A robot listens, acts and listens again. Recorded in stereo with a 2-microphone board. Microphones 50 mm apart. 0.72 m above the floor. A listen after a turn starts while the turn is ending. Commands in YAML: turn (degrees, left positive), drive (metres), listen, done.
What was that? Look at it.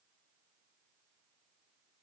listen: true
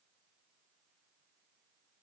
listen: true
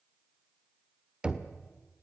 turn: -20
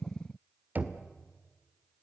turn: -145
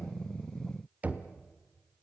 turn: -30
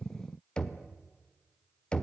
turn: 20
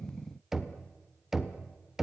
done: "Facing the knocking."